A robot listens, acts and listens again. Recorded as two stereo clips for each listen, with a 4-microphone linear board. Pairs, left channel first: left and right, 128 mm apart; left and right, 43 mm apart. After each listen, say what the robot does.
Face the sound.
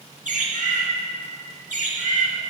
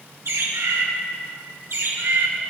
Turn 90° right.
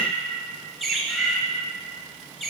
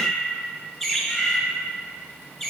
Found it: a bird, straight ahead, 1 to 2 m away.